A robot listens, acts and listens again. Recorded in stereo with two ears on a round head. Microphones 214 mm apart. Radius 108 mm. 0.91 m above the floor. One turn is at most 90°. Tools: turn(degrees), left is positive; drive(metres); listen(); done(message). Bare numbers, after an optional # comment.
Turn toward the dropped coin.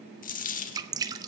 # The dropped coin: about 35° left or 145° left.
turn(35)
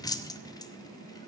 listen()
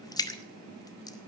done("I heard a dropped coin, but can't make it out now. It was about straight ahead or 110° left.")